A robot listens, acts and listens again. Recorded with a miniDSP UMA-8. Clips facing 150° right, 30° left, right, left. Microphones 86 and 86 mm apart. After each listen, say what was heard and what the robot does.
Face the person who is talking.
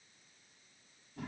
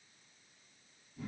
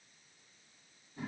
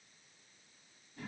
Keep listening.
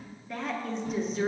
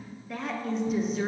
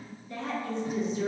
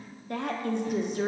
The woman speaking: 120° left. Turn 120° left.
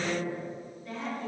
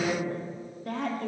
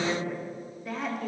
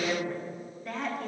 Facing the woman speaking, under 1 m away.